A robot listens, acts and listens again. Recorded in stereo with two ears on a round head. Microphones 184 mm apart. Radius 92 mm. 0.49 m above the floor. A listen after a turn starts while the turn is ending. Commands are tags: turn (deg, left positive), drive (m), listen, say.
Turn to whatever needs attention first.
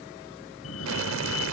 <turn deg="90"/>
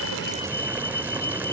<turn deg="15"/>
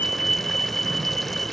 <say>Facing the fire alarm.</say>